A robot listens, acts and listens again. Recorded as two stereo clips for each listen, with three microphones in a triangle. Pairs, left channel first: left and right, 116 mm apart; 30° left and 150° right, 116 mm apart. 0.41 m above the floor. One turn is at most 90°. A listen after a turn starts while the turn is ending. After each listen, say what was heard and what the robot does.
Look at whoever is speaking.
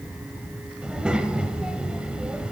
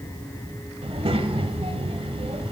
The child speaking: 170° right. Turn 90° right.
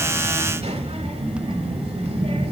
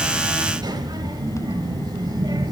The child speaking is now 100° right. Turn 90° right.
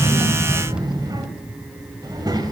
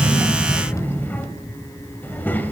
The child speaking is now 40° right. Turn 40° right.
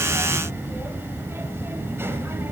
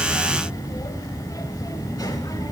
The child speaking is now 25° right. Turn 25° right.
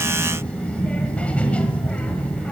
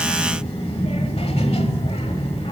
The child speaking is now 15° left. Turn 15° left.
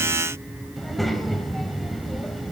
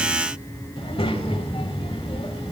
Found it: a child speaking, straight ahead, 1 to 2 m away.